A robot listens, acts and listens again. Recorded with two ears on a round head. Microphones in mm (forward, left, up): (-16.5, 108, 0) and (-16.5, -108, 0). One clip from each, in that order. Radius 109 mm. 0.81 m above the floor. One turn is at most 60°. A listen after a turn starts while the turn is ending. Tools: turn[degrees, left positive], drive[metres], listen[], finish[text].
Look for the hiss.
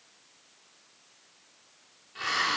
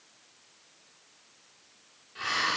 Action: turn[30]
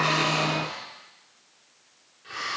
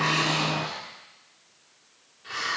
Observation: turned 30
Thought: So it is at 20° right.
Action: turn[-20]
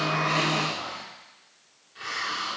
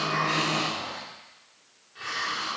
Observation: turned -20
Action: finish[Facing the hiss.]